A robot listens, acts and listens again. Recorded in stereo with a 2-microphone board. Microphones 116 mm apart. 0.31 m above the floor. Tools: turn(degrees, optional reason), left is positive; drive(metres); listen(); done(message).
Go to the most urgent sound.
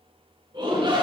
turn(degrees=-45, reason="The shout: about 45° right or 135° right.")
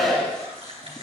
drive(metres=1.0)
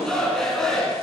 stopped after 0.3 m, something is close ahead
done("Something is in my way. I am facing the shout but have not reached it.")